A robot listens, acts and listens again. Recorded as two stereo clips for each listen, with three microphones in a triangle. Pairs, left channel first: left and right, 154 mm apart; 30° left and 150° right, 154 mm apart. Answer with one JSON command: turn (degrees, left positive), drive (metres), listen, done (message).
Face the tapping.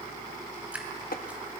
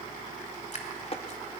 {"turn": 75}
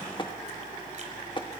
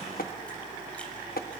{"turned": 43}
{"turn": 35}
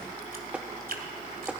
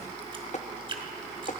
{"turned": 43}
{"done": "Facing the tapping."}